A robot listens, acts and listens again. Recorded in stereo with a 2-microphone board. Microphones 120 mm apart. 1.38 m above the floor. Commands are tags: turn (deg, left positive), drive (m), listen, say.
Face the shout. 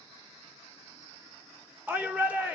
<turn deg="-30"/>
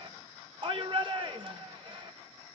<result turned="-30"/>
<turn deg="-135"/>
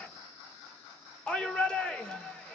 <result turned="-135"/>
<say>Found it: a shout, straight ahead.</say>